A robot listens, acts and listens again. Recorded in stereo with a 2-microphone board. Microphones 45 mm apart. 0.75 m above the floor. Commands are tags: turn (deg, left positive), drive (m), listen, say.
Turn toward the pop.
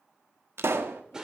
<turn deg="-70"/>
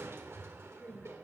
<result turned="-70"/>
<listen/>
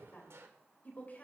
<say>I heard a pop, but can't make it out now. It was about straight ahead or 40° right.</say>